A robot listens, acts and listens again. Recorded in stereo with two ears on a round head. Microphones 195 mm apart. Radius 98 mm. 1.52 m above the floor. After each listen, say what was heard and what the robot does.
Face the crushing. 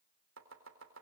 Keep listening.
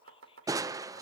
The crushing: about 15° right or 165° right. Turn 15° right.
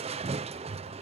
So it is at 150° right. Turn 150° right.
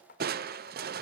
The crushing is now 50° right. Turn 50° right.
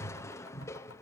The crushing is now 15° left. Turn 15° left.
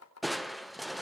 Facing the crushing.